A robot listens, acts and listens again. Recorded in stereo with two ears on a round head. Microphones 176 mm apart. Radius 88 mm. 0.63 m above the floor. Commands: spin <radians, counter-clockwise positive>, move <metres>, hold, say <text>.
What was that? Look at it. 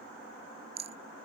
spin -0.52
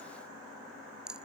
say Facing the rattle.